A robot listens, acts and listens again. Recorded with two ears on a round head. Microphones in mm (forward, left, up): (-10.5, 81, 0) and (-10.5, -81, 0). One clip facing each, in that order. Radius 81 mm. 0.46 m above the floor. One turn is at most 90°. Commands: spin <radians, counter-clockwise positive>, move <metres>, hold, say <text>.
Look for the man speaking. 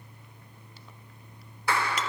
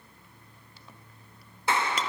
hold
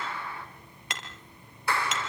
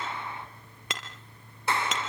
hold
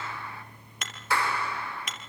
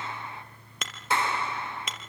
say I can't make out a man speaking, only a clap and hammering.